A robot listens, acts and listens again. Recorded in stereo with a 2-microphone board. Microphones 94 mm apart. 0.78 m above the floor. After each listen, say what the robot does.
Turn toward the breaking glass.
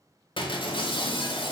Turn 60° left.
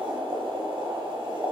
Keep listening.
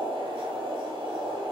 I heard breaking glass, but can't make it out now. It was about straight ahead or 60° left.